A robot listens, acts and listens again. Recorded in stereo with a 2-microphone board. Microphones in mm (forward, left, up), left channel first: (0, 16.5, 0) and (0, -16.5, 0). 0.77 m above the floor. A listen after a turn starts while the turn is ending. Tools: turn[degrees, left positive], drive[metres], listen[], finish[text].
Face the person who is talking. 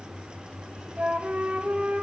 Action: listen[]
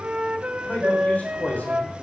Thought: The man speaking: about 65° left or 115° left.
Action: turn[65]
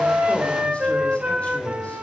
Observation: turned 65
Action: listen[]
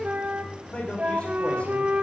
Thought: So it is at 45° left.
Action: turn[45]
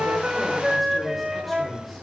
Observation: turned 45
Action: listen[]
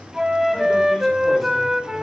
Action: listen[]
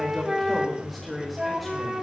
Action: finish[Facing the man speaking, 2 to 4 m away.]